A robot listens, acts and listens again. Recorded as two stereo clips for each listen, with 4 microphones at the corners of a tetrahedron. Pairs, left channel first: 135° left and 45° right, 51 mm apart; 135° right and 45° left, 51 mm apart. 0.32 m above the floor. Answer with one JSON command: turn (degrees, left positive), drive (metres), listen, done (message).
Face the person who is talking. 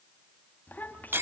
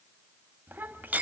{"turn": 85}
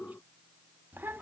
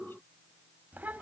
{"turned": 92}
{"done": "Facing the child speaking."}